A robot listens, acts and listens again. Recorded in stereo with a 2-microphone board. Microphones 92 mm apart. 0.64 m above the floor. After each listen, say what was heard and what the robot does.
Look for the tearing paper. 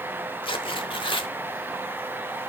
The tearing paper: about 65° left or 115° left. Turn 65° left.
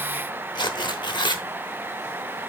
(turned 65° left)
So it is at 55° left. Turn 55° left.
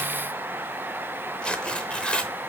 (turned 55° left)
The tearing paper is now 10° left. Turn 10° left.
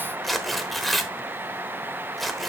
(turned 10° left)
Facing the tearing paper, under 1 m away.